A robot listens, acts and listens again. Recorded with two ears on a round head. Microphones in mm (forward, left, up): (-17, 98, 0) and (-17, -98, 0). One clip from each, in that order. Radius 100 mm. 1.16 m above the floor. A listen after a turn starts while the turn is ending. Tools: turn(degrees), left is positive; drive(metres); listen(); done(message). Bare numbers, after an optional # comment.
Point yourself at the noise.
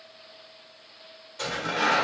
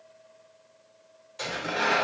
# The tearing paper: about 20° right or 160° right.
turn(-20)
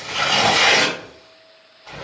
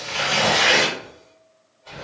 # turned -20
done("Facing the tearing paper, 1 to 2 m away.")